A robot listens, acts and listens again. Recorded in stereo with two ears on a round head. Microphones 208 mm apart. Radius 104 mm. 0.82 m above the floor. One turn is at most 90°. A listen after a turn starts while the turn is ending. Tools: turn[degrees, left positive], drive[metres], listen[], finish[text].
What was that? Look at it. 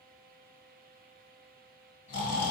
Thought: The snoring: about 50° left or 130° left.
Action: turn[50]
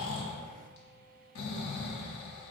Thought: So it is at 70° left.
Action: turn[70]
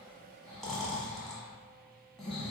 Action: finish[Found it: snoring, straight ahead.]